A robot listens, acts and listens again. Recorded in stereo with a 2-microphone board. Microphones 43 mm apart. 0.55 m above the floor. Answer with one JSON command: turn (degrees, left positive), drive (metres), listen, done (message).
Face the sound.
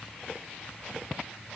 {"listen": true}
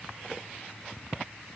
{"listen": true}
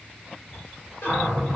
{"turn": 65}
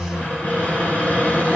{"turn": 35}
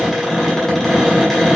{"done": "Found it: a cupboard door, straight ahead, 1 to 2 m away."}